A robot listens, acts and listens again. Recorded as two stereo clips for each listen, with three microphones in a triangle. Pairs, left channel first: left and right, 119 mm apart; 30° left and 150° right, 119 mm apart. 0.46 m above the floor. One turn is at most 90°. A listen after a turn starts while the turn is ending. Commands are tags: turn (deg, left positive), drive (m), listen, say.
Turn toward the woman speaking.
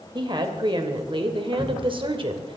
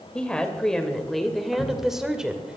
<turn deg="-70"/>
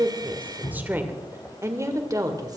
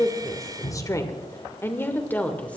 <turn deg="-45"/>
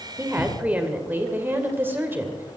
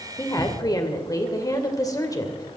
<turn deg="-20"/>
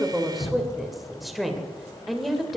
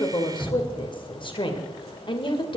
<say>Found it: a woman speaking, straight ahead, 2 to 4 m away.</say>